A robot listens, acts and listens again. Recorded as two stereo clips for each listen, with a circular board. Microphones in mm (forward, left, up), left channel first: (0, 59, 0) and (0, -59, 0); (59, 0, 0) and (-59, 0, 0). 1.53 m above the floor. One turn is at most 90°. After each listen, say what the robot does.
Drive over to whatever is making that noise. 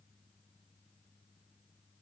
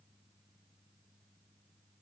Keep listening.
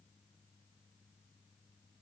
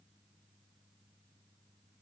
Keep listening.
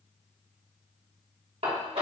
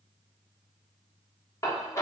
Turn 65° right.
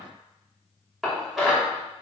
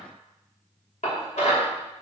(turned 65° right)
Drive 1.0 m forward.
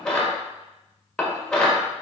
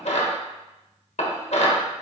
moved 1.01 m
Drive 1.0 m forward.
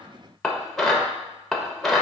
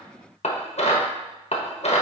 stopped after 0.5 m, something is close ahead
Arrived at the dishes clattering, straight ahead.